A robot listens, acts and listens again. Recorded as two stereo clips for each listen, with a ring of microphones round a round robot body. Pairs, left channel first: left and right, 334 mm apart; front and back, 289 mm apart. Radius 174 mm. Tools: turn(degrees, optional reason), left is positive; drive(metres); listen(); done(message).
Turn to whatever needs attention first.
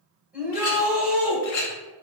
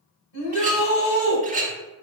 done("Found it: a shout, straight ahead, 1 to 2 m away.")